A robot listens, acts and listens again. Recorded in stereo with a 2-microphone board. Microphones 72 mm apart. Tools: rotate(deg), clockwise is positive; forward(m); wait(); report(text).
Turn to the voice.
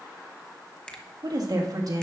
rotate(60)
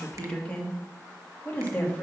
rotate(-25)
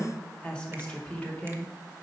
rotate(-20)
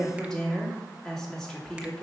report("Facing the woman speaking, 2 to 4 m away.")